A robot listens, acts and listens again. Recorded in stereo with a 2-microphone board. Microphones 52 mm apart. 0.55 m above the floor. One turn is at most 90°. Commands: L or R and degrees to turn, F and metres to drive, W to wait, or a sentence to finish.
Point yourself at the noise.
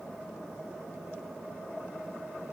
W
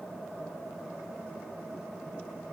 W
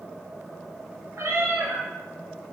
R90
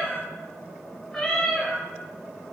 Facing the cat meowing, 2 to 4 m away.